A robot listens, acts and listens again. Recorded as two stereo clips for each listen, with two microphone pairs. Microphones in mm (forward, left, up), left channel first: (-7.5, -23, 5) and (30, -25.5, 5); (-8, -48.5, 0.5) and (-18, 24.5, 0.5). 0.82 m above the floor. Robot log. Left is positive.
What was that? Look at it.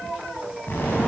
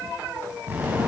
note: The explosion: 160° left.
cmd yaw +160
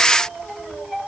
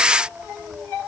end: I heard an explosion from this way, but can't make it out now.